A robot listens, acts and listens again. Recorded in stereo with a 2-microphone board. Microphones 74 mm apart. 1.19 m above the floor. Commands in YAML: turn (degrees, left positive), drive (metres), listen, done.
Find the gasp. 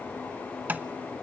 listen: true
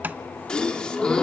turn: 30
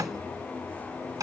listen: true
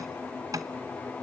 done: "I heard a gasp, but can't make it out now. It was about 15° right or 135° left."